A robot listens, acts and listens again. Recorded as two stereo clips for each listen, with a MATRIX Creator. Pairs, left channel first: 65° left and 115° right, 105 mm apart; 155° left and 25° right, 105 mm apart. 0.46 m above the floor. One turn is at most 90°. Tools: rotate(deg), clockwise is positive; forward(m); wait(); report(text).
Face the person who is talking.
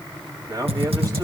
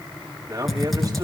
rotate(70)
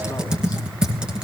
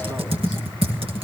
wait()
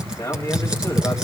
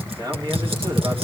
rotate(-15)
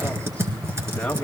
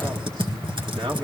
wait()
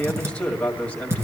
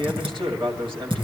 report("Found it: a man speaking, straight ahead.")